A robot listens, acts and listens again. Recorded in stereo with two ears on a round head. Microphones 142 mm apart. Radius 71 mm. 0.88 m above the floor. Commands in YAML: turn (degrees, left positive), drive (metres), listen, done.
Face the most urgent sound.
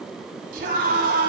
turn: -60
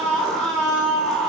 done: "Facing the scream, over 4 m away."